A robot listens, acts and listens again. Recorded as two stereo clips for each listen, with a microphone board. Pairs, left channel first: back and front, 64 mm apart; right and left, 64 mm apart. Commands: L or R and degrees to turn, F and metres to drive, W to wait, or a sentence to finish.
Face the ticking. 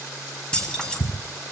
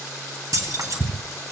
L145
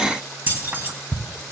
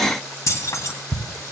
R15
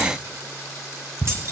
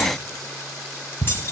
Found it: ticking, straight ahead.